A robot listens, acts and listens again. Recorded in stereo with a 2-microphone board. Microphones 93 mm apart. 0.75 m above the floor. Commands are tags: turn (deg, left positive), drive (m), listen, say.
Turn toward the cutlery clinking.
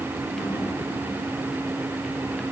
<listen/>
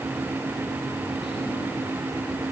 <listen/>
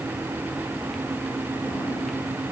<say>I can't make out cutlery clinking.</say>